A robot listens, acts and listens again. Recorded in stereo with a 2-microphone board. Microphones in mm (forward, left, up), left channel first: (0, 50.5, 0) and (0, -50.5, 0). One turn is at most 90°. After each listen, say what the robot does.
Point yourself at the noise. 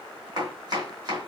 Turn 40° right.
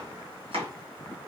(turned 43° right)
Turn 90° right.
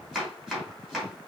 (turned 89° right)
Found it: chopping, straight ahead.